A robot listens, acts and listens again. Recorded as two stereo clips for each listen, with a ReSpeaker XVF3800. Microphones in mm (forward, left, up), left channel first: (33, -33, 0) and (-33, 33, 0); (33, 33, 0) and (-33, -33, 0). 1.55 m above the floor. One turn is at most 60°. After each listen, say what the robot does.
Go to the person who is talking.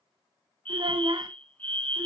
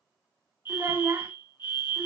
Turn 60° left.
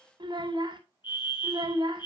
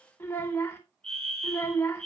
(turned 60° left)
Turn 60° left.
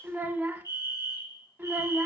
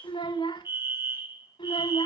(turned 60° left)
Turn 60° left.
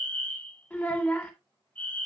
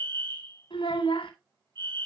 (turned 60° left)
Turn 25° left.
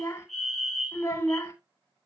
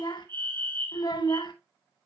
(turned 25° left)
Turn 10° left.
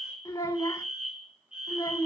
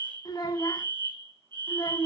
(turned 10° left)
Drive 1.0 m forward.
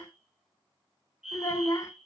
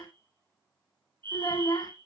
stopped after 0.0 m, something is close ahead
Something is in my way. I am facing the child speaking but have not reached it.